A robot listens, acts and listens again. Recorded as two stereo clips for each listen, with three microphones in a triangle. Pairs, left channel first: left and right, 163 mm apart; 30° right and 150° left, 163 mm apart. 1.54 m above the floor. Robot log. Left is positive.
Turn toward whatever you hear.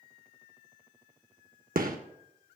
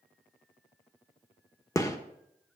note: The gunshot: 100° right.
cmd yaw -100
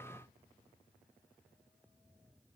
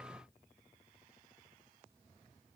end: Facing where the gunshot came from. I can't hear it now.